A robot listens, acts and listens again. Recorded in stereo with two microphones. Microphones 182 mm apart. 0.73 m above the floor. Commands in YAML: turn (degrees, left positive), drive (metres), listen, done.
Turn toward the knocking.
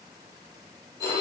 listen: true
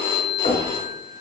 turn: 50
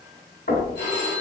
turn: 70
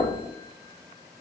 turn: 10
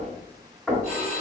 done: "Facing the knocking, 1 to 2 m away."